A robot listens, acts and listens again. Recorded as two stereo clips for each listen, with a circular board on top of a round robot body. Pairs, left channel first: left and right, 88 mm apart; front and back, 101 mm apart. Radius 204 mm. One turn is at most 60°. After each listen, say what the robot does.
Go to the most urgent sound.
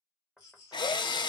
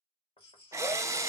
Turn 35° left.
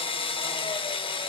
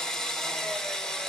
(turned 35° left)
Keep listening.
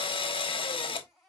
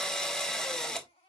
Drive 1.0 m forward.
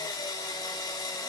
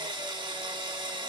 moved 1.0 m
Keep listening.
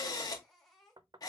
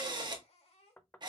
Drive 1.0 m forward.
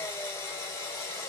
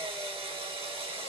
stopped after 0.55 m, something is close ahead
Keep listening.
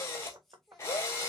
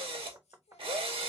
Keep listening.
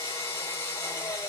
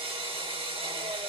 Facing where the baby crying came from. I can't hear it now. I did not reach it.